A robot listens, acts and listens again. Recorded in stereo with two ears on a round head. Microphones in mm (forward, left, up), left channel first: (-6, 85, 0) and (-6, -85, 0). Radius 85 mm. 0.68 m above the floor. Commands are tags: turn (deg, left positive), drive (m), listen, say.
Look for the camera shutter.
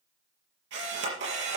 <turn deg="-70"/>
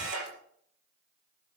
<turn deg="-45"/>
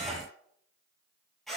<say>Found it: a camera shutter, straight ahead, over 4 m away.</say>